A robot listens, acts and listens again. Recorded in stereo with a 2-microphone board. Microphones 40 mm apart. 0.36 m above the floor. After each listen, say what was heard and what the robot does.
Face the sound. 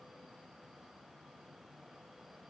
Keep listening.
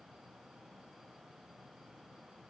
Keep listening.
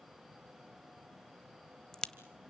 The crack: about 20° left or 160° left. Turn 20° left.
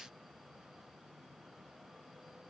Keep listening.
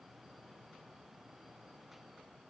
I heard a crack, but can't make it out now. It was about straight ahead or 140° left.